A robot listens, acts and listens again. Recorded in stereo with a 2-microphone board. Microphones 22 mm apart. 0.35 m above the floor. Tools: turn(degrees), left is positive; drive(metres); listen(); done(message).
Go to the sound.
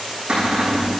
turn(degrees=-70)
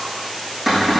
drive(metres=1.0)
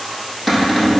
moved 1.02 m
drive(metres=1.0)
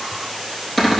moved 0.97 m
turn(degrees=10)
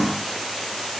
listen()
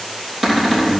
drive(metres=1.0)
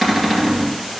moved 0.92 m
drive(metres=1.0)
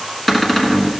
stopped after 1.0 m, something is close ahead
turn(degrees=10)
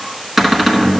done("I am next to the cupboard door.")